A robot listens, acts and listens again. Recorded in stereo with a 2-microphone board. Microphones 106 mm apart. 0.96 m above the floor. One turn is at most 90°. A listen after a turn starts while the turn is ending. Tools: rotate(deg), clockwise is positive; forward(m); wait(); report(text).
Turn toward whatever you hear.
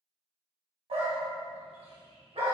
rotate(75)
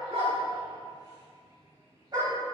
rotate(40)
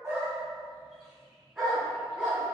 report("Found it: a dog barking, straight ahead, 2 to 4 m away.")